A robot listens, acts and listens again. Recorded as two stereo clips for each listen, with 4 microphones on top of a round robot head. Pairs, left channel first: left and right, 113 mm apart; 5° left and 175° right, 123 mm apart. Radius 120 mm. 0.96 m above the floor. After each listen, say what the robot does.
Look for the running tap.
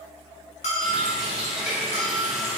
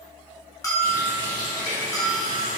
Found it: a running tap, straight ahead.